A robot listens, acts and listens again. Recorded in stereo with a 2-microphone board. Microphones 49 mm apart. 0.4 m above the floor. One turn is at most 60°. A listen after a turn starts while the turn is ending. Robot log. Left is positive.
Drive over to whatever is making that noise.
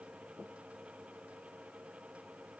cmd idle
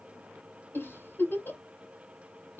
note: The giggle: about 50° left or 130° left.
cmd yaw +50
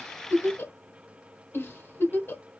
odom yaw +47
note: So it is at 70° left.
cmd yaw +60
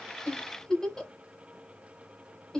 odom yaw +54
note: The giggle is now 15° left.
cmd yaw +15
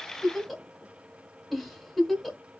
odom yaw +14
cmd fwd 1.0
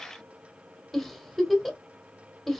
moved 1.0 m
cmd fwd 1.0
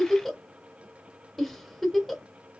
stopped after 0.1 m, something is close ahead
end: I am next to the giggle.